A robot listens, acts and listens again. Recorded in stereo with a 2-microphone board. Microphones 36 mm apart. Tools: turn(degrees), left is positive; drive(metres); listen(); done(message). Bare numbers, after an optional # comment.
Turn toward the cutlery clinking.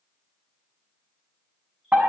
listen()
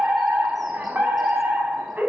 listen()
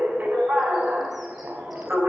done("I can't make out cutlery clinking, only a fire alarm.")